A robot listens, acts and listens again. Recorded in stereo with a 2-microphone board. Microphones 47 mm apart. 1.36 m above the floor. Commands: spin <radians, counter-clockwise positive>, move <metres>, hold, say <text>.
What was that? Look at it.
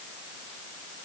hold
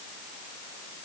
hold
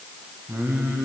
spin -1.22
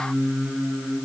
spin -0.52
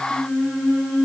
say Found it: singing, straight ahead, over 4 m away.